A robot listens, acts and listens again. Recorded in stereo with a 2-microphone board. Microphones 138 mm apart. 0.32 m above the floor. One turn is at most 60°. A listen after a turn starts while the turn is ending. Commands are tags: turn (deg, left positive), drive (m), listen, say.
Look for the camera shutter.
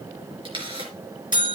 <turn deg="-40"/>
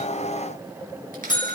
<listen/>
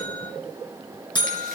<listen/>
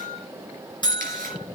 <say>I heard a camera shutter, but can't make it out now. It was about straight ahead or 100° right.</say>